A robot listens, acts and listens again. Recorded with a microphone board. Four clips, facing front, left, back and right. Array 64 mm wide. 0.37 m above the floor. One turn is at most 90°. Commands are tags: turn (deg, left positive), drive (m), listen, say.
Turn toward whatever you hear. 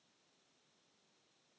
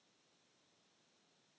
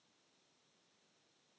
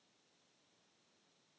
<listen/>
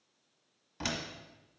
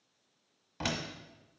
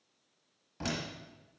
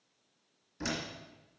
<turn deg="80"/>
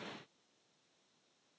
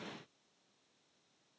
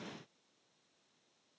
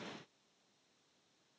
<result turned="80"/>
<say>I heard a door slam from this way, but can't make it out now.</say>